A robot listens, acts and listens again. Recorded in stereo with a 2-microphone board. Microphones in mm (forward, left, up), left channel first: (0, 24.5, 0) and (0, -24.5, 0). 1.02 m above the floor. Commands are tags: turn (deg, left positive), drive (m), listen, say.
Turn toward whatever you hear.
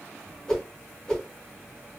<turn deg="30"/>
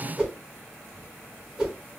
<turn deg="-15"/>
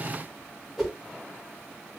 <say>Facing the whoosh, 1 to 2 m away.</say>